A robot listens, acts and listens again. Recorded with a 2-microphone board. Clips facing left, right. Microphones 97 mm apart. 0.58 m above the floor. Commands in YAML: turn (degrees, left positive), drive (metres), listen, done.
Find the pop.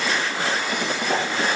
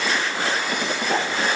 turn: 30
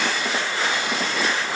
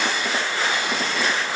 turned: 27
listen: true
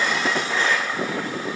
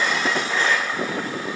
done: "I heard a pop, but can't make it out now. It was about 25° right or 150° left."